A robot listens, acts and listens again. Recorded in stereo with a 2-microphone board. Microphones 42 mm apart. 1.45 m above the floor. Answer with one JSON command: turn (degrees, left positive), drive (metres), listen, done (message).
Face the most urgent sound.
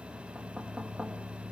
{"listen": true}
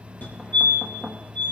{"turn": 55}
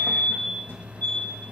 {"turn": 65}
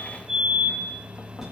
{"done": "Facing the fire alarm."}